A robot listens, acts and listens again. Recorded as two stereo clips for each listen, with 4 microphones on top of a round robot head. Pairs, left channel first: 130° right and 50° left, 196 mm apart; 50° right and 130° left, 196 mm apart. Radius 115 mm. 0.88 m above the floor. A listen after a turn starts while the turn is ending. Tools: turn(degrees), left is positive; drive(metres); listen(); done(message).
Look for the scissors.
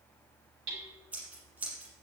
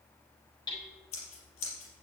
turn(degrees=-30)
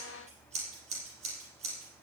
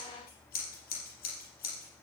turn(degrees=-10)
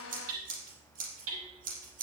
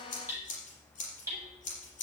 done("Facing the scissors.")